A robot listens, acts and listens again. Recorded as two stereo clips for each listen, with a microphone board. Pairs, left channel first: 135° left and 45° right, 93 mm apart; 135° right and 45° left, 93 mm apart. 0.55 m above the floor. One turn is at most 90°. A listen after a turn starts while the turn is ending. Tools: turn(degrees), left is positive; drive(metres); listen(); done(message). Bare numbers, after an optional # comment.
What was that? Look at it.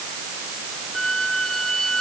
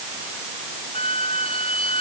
# The squeak: 140° right.
turn(-90)
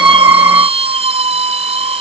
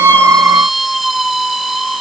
# The squeak is now 45° right.
turn(-45)
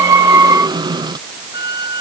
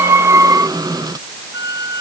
done("Facing the squeak.")